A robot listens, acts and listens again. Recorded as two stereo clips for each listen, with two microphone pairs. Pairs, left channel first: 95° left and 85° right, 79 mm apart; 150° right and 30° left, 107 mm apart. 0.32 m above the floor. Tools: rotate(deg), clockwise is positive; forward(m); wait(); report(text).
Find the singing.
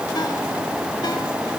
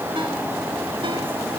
wait()
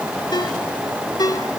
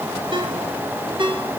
wait()
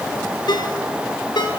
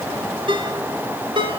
report("I can't make out singing to turn to.")